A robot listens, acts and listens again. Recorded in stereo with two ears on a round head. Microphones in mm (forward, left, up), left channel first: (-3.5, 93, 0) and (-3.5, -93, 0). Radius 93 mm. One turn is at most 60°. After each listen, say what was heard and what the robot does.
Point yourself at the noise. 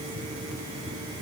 Keep listening.
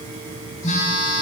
The phone buzzing: about 35° left or 145° left. Turn 35° left.
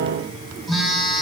Found it: a phone buzzing, straight ahead.